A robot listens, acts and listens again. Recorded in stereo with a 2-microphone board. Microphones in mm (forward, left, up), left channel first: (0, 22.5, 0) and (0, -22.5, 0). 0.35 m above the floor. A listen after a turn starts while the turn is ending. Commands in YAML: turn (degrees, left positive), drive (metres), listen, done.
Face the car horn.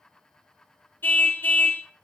turn: 50
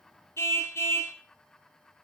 turn: 80
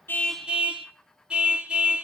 turn: -20
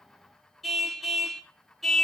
done: "Facing the car horn, 2 to 4 m away."